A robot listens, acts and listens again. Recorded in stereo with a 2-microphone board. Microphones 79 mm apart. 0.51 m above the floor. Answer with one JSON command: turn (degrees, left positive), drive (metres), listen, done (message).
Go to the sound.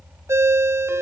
{"turn": -35}
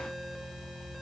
{"listen": true}
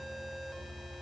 {"listen": true}
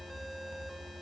{"done": "I heard a ringtone, but can't make it out now. It was about straight ahead or 110° right. I did not reach it."}